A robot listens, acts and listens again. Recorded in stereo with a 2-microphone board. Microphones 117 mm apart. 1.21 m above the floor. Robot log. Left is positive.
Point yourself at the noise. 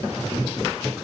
cmd idle
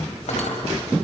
note: The cutlery clinking: about 75° left or 105° left.
cmd yaw +75
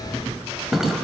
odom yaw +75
cmd idle
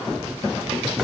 cmd idle
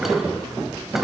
end: I heard cutlery clinking, but can't make it out now. It was about straight ahead or 30° left.